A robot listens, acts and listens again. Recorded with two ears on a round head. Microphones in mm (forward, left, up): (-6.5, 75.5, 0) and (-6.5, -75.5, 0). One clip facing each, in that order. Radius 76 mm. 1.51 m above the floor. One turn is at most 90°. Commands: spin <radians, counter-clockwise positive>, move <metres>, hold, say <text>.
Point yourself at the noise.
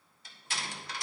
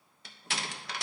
spin -0.96
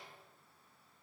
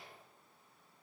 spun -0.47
hold
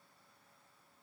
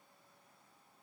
say I heard a door slam, but can't make it out now. It was about 30° right or 95° right.